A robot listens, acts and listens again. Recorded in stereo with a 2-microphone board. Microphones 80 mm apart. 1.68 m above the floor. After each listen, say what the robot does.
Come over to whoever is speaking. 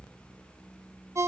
Keep listening.
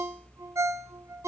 Keep listening.
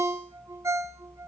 I can't make out anyone speaking, only a ringtone.